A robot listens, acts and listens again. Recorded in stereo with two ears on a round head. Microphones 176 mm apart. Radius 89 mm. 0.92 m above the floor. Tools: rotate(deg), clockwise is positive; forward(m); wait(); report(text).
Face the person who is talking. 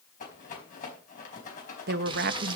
rotate(55)
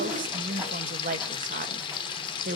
rotate(50)
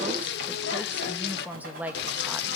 rotate(10)
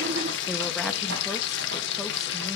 wait()
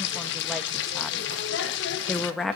report("Found it: a woman speaking, straight ahead, under 1 m away.")